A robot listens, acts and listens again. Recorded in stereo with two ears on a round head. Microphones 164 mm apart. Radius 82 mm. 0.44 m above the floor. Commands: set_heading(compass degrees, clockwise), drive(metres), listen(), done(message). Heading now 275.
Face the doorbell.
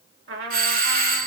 set_heading(320)
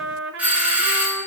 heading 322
set_heading(332)
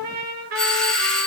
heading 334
done("Found it: a doorbell, straight ahead, 2 to 4 m away.")